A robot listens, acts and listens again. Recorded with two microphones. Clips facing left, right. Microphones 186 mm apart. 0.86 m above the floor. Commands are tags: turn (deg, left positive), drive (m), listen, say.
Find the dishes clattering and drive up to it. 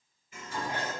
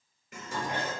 <turn deg="-70"/>
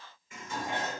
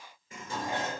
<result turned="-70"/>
<turn deg="-35"/>
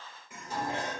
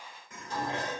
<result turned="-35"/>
<turn deg="10"/>
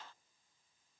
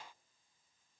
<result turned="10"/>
<listen/>
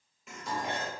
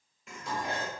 <drive m="1.0"/>
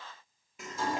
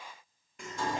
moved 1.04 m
<drive m="1.0"/>
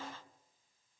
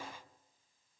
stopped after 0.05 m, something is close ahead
<listen/>
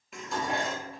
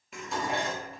<say>I am next to the dishes clattering.</say>